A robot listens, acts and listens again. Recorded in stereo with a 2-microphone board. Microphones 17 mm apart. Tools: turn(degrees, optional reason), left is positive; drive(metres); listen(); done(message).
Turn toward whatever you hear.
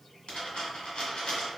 turn(degrees=70, reason="The dropped coin: about 70° left or 110° left.")
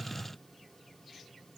listen()
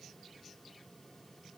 done("I heard a dropped coin, but can't make it out now. It was about straight ahead or 40° left.")